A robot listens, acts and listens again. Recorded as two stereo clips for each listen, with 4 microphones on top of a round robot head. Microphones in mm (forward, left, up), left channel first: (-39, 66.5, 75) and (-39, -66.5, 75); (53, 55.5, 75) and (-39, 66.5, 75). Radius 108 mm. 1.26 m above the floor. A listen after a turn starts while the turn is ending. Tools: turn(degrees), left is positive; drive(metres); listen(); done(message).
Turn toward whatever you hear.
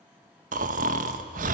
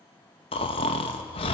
turn(degrees=-50)
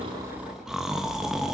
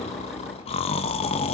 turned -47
done("Facing the snoring, under 1 m away.")